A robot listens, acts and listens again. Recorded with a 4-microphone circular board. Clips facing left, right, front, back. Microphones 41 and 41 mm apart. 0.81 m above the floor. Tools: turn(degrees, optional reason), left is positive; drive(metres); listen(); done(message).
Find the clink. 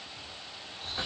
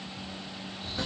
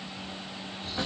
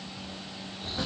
listen()
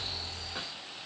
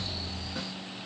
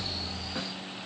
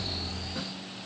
listen()
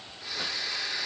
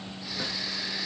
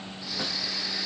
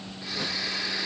done("I can't make out a clink to turn to.")